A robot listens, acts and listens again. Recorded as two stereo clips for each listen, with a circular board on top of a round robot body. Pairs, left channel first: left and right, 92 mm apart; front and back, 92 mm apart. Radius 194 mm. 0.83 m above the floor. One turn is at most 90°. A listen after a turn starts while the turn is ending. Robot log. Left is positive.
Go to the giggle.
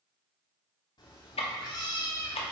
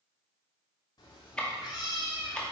cmd idle
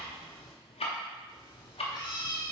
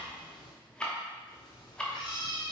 cmd idle
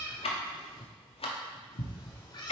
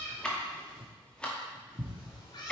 end: I can't make out a giggle to turn to.